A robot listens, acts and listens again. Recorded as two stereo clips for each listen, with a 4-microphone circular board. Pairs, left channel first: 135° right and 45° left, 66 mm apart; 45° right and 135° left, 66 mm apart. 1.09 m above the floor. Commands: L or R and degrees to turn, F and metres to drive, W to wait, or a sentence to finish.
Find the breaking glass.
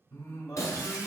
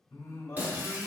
R165
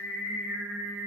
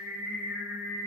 I heard breaking glass from this way, but can't make it out now.